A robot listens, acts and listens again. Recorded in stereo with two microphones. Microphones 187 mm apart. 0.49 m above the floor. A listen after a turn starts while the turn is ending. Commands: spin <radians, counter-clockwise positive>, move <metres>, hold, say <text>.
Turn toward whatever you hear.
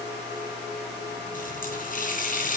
spin 0.79
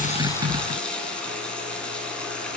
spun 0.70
say Facing the running tap.